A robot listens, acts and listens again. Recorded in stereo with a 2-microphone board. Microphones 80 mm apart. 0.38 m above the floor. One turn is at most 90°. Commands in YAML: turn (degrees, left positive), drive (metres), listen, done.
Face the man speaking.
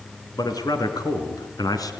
turn: 55
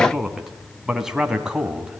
turn: -10
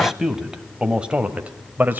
turn: -25
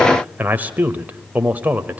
turn: -20
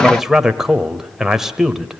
done: "Found it: a man speaking, straight ahead."